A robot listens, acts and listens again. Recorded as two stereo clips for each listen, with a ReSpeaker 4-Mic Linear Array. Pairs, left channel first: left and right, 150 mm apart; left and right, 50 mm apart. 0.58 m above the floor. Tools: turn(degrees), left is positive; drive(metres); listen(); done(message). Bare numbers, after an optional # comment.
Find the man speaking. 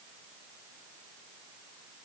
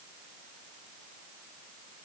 listen()
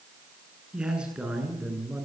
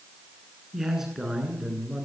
turn(-30)
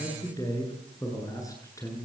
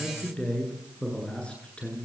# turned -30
# So it is at 20° left.
turn(20)
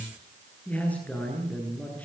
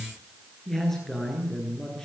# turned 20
# The man speaking is now 10° left.
turn(10)
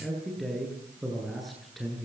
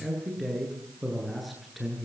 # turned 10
done("Found it: a man speaking, straight ahead, over 4 m away.")